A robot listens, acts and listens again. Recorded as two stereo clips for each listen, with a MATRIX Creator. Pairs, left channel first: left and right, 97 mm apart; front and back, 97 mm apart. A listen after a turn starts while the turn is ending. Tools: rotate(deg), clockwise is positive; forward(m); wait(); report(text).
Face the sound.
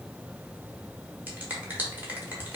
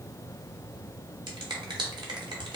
rotate(160)
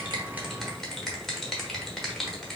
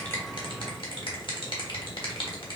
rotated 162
report("Found it: a finger snap, straight ahead.")